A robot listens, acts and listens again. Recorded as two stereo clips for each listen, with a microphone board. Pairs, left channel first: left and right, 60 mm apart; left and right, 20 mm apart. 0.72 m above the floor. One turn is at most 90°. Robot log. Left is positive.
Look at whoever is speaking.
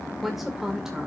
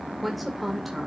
cmd yaw -30
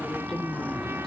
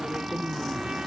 cmd idle
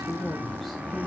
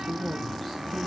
cmd yaw +30
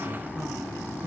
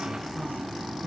cmd idle
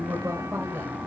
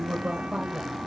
note: So it is at 45° right.
cmd yaw -45
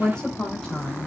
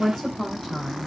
end: Facing the woman speaking.